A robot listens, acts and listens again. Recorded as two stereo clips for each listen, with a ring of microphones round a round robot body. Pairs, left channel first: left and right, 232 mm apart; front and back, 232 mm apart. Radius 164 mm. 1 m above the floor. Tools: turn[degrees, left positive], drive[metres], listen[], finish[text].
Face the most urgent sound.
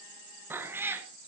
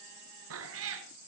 Action: listen[]
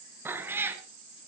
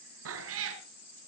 Action: listen[]
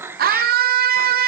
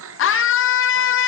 Thought: The scream: 35° right.
Action: turn[-35]
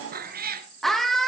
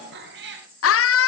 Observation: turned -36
Action: finish[Facing the scream.]